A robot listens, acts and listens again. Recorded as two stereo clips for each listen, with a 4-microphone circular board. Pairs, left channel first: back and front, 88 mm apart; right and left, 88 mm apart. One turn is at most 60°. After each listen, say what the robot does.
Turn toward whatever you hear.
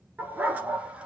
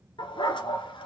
Turn 60° right.
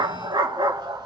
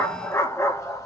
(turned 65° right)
Turn 35° right.
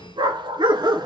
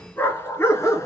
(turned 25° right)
Turn 35° right.
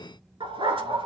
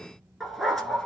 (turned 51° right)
Facing the dog barking.